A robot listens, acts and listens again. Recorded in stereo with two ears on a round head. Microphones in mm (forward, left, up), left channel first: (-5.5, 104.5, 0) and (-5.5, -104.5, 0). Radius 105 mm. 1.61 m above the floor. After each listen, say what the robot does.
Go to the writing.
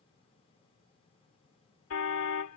Keep listening.
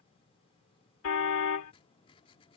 Turn 25° left.
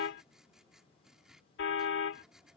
Drive 1.0 m forward.
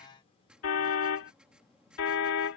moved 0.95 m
Drive 1.0 m forward.
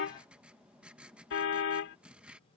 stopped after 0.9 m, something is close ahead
I am next to the writing.